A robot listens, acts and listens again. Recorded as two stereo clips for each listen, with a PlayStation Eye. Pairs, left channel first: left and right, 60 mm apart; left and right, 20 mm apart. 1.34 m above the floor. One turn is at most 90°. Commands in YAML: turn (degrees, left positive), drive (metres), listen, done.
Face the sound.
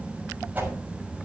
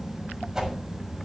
turn: -25
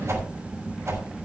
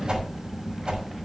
turn: -90
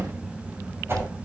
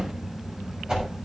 turn: -45
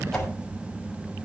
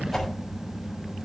done: "Found it: a whoosh, straight ahead."